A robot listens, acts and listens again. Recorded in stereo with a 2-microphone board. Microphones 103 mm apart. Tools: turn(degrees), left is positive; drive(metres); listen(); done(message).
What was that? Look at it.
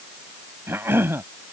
turn(degrees=-20)
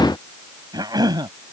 turn(degrees=-135)
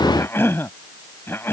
turn(degrees=25)
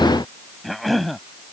done("Found it: a cough, straight ahead.")